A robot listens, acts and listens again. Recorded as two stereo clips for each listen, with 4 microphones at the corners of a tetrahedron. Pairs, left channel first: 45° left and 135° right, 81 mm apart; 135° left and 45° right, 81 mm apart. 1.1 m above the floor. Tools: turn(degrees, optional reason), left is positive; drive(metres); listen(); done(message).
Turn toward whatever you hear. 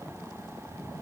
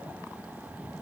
listen()
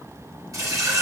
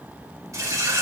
turn(degrees=-90, reason="The running tap: 90° right.")
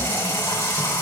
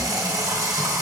done("Found it: a running tap, straight ahead, 2 to 4 m away.")